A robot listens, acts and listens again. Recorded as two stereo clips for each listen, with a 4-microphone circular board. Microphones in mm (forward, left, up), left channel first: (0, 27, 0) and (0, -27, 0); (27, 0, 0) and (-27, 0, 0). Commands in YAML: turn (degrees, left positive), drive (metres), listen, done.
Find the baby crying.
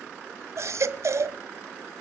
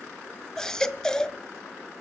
turn: -80
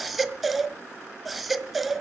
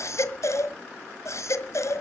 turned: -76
done: "Found it: a baby crying, straight ahead."